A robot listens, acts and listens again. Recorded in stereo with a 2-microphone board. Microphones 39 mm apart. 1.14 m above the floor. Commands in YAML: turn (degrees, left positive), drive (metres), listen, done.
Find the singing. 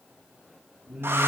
turn: -35
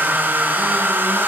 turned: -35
listen: true
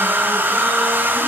listen: true
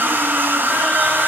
done: "I heard singing, but can't make it out now. It was about straight ahead or 110° right."